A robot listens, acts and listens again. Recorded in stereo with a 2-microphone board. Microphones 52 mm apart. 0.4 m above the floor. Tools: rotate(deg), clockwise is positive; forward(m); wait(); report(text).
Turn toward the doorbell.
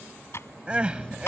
rotate(-20)
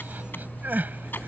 rotate(-140)
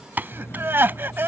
rotate(-55)
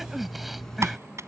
rotate(-10)
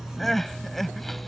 report("Found it: a doorbell, straight ahead.")